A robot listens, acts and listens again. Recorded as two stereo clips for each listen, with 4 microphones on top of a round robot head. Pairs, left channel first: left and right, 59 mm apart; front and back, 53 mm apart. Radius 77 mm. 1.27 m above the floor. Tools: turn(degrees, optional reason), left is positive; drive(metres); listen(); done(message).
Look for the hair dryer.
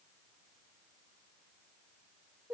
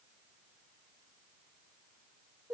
listen()
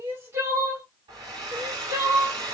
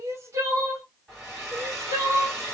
turn(degrees=-90, reason="The hair dryer: 90° right.")
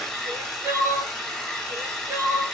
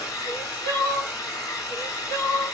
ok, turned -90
done("Found it: a hair dryer, straight ahead.")